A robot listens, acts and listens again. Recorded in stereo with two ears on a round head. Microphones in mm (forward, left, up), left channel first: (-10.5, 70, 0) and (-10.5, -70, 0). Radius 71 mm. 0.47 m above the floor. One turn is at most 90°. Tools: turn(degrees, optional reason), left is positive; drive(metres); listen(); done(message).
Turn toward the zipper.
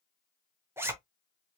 turn(degrees=-15, reason="The zipper: about 15° right or 165° right.")
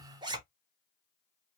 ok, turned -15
turn(degrees=-90, reason="So it is at 150° right.")
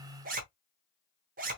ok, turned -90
turn(degrees=-70, reason="The zipper is now 70° right.")
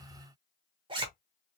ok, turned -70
turn(degrees=-35, reason="The zipper is now 35° right.")
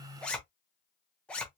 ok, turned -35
turn(degrees=10, reason="The zipper is now 10° left.")
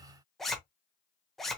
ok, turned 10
done("Found it: a zipper, straight ahead.")